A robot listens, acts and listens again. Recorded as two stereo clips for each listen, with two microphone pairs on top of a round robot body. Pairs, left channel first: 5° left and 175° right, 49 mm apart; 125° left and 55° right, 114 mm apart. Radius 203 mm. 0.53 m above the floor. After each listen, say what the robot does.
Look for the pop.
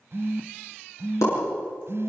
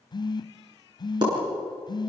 Facing the pop.